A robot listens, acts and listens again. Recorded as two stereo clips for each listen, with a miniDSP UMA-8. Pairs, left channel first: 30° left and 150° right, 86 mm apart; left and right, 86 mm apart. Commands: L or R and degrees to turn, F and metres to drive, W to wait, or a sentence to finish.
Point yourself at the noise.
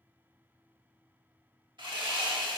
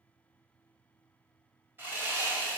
R150
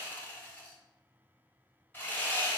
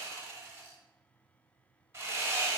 R35
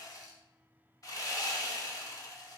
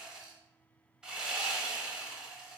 R10
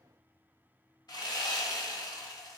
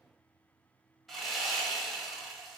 Facing the sawing.